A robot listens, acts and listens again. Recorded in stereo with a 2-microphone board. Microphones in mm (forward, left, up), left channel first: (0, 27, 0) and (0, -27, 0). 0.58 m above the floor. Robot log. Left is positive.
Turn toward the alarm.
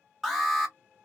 cmd yaw +30
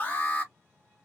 note: So it is at 145° left.
cmd yaw +145
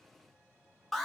end: Found it: an alarm, straight ahead, 1 to 2 m away.